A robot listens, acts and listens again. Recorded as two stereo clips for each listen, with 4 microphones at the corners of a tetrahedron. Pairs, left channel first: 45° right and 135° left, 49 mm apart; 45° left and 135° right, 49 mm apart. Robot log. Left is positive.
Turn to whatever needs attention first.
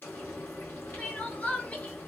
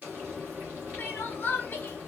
note: The crying: 10° left.
cmd yaw +10
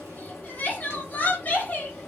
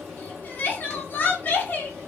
end: Found it: crying, straight ahead.